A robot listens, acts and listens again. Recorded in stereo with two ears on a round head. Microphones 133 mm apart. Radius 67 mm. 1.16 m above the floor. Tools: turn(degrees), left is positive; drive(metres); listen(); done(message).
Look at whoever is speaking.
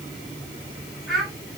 turn(degrees=30)
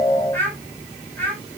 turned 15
turn(degrees=165)
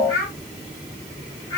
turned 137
turn(degrees=30)
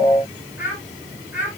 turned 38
turn(degrees=-10)
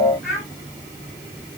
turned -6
done("Facing the child speaking.")